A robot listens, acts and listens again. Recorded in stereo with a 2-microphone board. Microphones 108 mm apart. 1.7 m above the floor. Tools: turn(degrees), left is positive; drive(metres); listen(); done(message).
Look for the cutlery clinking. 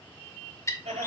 listen()
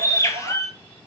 listen()
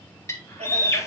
done("I can't make out cutlery clinking to turn to.")